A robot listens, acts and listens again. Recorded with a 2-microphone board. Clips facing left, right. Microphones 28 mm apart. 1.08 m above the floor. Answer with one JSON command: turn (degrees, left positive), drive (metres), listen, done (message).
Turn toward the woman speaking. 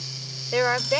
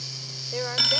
{"turn": 45}
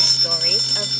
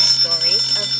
{"listen": true}
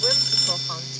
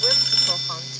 {"listen": true}
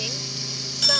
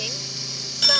{"done": "I heard a woman speaking, but can't make it out now. It was about straight ahead or 90° left."}